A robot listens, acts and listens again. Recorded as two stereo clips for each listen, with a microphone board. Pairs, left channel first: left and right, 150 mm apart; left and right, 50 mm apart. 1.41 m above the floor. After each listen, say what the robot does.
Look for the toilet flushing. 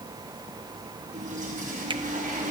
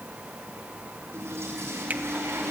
Turn 55° right.
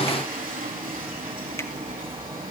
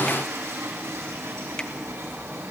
Turn 70° right.
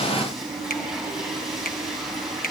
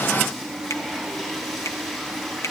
Found it: a toilet flushing, straight ahead, over 4 m away.